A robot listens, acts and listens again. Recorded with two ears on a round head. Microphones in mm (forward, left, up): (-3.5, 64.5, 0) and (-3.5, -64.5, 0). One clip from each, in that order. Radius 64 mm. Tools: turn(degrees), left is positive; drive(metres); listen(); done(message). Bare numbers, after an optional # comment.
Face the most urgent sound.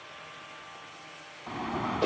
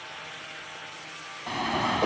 # The alarm: about 75° right or 105° right.
turn(-75)
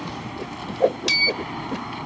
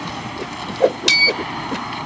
# So it is at 30° right.
turn(-30)
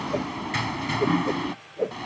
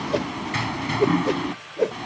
done("Facing the alarm.")